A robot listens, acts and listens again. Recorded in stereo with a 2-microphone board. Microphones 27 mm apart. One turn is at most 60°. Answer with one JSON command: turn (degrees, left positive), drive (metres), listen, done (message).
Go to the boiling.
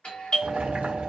{"turn": -60}
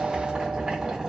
{"turn": -20}
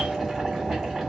{"drive": 1.0}
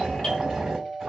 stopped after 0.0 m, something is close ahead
{"done": "Something is in my way. I am facing the boiling but have not reached it."}